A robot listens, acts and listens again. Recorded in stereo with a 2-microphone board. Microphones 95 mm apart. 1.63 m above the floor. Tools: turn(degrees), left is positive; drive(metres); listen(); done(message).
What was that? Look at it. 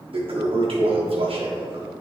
turn(degrees=-70)
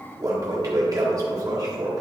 turn(degrees=-40)
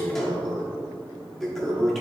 done("Found it: a toilet flushing, straight ahead, 1 to 2 m away.")